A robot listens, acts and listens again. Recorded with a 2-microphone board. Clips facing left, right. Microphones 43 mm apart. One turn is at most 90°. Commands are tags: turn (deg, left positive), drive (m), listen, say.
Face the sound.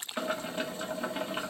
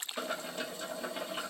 <turn deg="35"/>
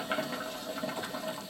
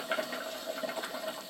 <say>Found it: boiling, straight ahead.</say>